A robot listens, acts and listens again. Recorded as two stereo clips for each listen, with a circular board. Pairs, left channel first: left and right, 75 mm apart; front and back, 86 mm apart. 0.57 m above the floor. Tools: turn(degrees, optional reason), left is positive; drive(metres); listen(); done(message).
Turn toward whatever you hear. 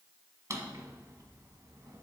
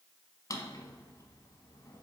turn(degrees=-45, reason="The drawer: 45° right.")
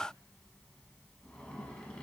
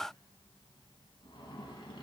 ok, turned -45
turn(degrees=15, reason="The drawer is now 15° left.")
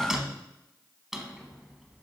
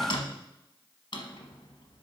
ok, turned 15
done("Facing the drawer.")